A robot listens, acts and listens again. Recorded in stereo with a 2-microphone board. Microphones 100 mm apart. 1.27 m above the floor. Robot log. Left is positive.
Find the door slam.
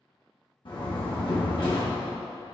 note: The door slam: about 50° left or 130° left.
cmd yaw +50
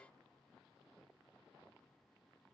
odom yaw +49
cmd idle
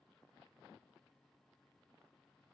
end: I heard a door slam, but can't make it out now. It was about 5° left or 80° left.